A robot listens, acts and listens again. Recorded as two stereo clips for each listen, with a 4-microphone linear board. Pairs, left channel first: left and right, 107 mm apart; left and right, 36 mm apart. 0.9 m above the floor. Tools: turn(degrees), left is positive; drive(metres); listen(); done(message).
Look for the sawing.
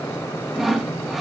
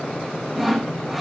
turn(degrees=30)
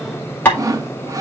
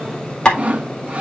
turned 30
turn(degrees=-30)
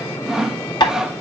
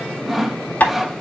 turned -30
done("Found it: sawing, straight ahead.")